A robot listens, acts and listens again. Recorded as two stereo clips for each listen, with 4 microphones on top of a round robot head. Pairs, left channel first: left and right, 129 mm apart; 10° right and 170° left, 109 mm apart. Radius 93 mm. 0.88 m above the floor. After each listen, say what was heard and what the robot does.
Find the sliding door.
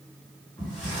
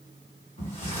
Facing the sliding door.